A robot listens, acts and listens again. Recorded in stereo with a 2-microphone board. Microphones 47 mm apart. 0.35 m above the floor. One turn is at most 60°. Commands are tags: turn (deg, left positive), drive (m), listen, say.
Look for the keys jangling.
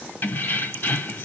<turn deg="55"/>
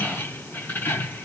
<turn deg="60"/>
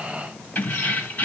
<turn deg="40"/>
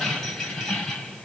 <say>Facing the keys jangling.</say>